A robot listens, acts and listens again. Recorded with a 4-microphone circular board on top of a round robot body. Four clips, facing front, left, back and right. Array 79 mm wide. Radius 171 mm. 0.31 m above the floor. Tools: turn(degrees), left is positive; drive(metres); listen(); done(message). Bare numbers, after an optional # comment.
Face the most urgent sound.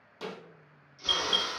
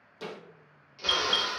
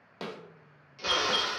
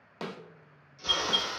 # The alarm: 65° left.
turn(65)
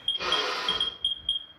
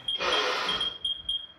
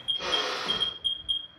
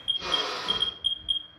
done("Found it: an alarm, straight ahead, 1 to 2 m away.")